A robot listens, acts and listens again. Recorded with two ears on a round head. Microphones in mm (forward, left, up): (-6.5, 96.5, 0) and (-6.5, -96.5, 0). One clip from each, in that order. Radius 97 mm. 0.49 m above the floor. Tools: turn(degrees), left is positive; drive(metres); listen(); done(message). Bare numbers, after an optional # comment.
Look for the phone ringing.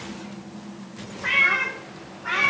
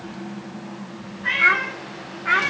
listen()
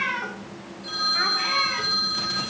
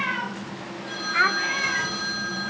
# The phone ringing: about 70° left or 110° left.
turn(70)
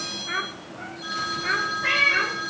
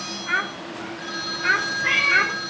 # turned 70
done("Found it: a phone ringing, straight ahead, over 4 m away.")